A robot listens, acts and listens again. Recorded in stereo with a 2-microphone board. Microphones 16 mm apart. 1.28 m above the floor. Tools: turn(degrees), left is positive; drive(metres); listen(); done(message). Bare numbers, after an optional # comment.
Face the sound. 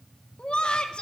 # The laughter: about 70° left or 110° left.
turn(70)
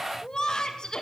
# So it is at 55° left.
turn(55)
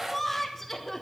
# The laughter is now 25° left.
turn(25)
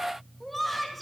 # The laughter is now 15° left.
turn(15)
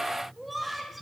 done("Found it: laughter, straight ahead, 2 to 4 m away.")